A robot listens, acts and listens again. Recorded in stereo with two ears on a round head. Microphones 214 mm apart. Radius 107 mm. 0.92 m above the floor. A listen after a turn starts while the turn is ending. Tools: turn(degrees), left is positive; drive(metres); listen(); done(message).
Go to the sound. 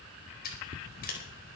turn(degrees=40)
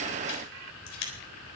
turn(degrees=95)
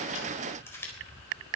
turn(degrees=10)
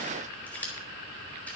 drive(metres=1.0)
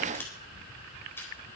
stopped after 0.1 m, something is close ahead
turn(degrees=10)
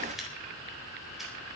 listen()
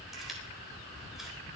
listen()
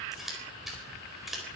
done("Something is in my way. I am facing the scissors but have not reached it.")